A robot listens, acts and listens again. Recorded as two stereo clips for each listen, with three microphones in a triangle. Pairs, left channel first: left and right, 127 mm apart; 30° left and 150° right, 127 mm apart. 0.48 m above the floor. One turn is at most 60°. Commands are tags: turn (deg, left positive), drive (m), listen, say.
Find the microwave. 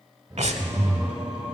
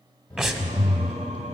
<turn deg="-10"/>
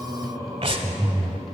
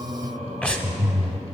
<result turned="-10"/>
<listen/>
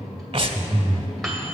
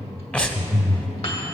<say>Facing the microwave.</say>